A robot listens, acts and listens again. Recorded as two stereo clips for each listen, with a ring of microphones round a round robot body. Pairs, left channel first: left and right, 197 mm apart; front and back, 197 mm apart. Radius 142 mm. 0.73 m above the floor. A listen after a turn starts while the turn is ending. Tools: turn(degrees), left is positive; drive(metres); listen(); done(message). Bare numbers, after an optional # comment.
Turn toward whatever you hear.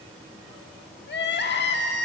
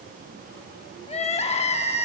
# The crying: 60° left.
turn(60)
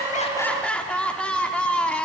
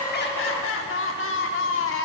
done("Facing the crying, 1 to 2 m away.")